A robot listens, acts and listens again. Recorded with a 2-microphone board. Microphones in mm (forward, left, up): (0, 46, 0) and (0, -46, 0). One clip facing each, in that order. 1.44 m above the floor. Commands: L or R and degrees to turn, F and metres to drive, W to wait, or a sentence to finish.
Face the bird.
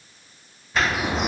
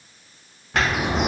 R70
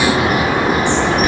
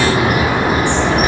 R10
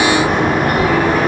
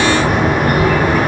Found it: a bird, straight ahead, 1 to 2 m away.